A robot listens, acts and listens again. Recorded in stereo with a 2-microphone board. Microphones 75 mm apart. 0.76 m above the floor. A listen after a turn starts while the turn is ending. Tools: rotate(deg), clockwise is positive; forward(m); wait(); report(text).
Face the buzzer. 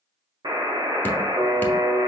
rotate(75)
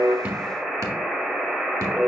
report("Facing the buzzer, 1 to 2 m away.")